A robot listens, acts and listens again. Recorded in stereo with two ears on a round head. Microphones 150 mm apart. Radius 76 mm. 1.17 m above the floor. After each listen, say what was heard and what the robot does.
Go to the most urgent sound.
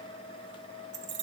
Keep listening.
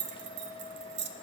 Keep listening.
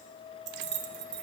I can't make out anything urgent to turn to.